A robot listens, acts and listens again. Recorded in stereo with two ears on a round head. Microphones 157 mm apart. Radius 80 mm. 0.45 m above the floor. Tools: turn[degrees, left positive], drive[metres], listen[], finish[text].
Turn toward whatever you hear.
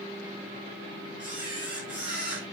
Action: turn[-30]
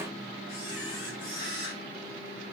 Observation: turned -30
Thought: So it is at 25° left.
Action: turn[25]
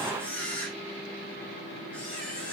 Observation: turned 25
Thought: The camera shutter is now 10° left.
Action: turn[10]
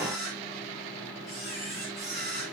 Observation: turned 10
Action: finish[Found it: a camera shutter, straight ahead.]